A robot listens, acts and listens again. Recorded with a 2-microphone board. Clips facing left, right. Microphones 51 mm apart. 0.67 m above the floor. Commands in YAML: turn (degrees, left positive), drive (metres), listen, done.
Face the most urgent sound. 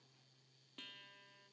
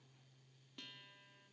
listen: true
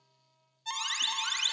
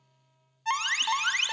turn: -50
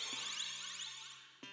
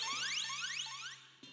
turn: -75
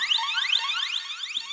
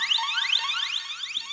done: "Found it: an alarm, straight ahead."